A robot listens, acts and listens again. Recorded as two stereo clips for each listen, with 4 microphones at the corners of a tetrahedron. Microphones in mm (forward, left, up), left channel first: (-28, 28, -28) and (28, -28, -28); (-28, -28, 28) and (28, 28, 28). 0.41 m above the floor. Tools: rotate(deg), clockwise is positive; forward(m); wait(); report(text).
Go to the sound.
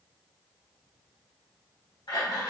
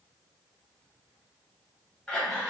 rotate(-135)
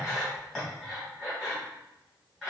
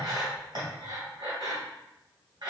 rotate(-45)
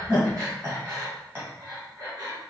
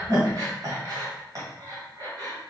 forward(1.0)
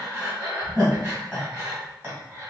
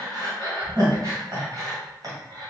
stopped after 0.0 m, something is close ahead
rotate(-10)
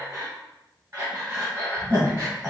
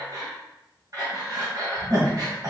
report("Blocked. The breathing is further on, straight ahead.")